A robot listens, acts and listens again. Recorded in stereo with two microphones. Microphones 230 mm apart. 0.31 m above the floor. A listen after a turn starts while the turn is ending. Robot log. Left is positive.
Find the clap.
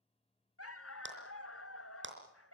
note: The clap: about 55° right or 125° right.
cmd yaw -55
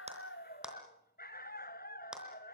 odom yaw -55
end: Found it: a clap, straight ahead.